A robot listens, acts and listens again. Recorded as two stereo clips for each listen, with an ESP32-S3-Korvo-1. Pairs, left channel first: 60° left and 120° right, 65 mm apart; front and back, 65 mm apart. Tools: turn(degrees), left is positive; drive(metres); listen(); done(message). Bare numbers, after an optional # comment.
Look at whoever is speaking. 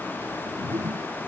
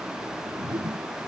listen()
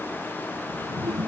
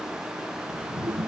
listen()
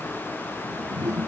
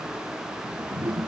done("I can't make out anyone speaking to turn to.")